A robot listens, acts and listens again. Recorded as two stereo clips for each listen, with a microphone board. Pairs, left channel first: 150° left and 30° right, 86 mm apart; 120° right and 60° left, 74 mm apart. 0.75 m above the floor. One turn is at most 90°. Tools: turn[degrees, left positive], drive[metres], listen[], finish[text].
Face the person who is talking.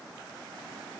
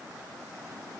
Action: listen[]
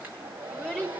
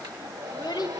Thought: The child speaking: 130° right.
Action: turn[-90]
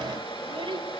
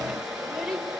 Thought: The child speaking is now 25° right.
Action: turn[-25]
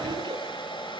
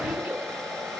Action: listen[]
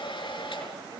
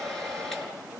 Action: listen[]
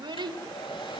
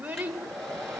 Thought: The child speaking is now 15° right.
Action: turn[-15]
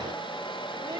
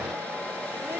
Action: listen[]
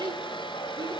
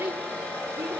Action: finish[Found it: a child speaking, straight ahead, 2 to 4 m away.]